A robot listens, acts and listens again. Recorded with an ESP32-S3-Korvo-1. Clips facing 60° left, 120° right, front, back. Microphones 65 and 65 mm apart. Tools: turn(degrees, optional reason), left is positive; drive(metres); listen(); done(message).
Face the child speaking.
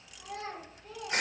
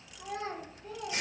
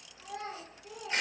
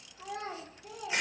turn(degrees=-175, reason="The child speaking: 175° right.")
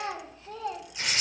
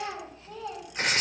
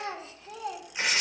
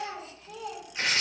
turn(degrees=40, reason="The child speaking is now 40° left.")
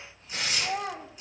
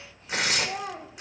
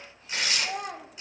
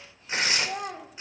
turn(degrees=40, reason="The child speaking is now 40° left.")
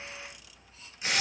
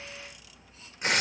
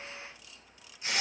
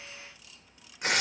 listen()
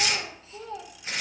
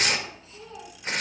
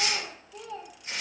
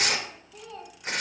turn(degrees=35, reason="The child speaking is now 35° left.")
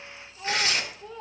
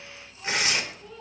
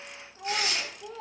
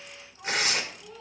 done("Facing the child speaking.")